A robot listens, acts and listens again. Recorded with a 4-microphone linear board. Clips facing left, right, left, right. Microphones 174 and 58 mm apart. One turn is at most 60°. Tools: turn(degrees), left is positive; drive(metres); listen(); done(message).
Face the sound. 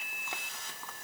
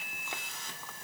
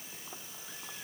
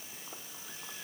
listen()
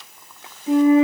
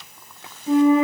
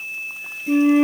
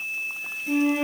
turn(degrees=30)
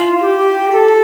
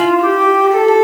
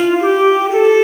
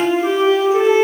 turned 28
turn(degrees=60)
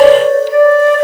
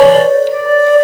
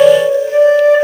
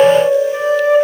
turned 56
turn(degrees=60)
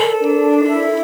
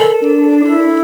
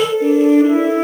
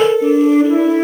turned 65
turn(degrees=20)
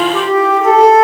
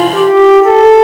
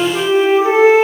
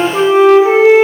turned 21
done("Facing the flute, over 4 m away.")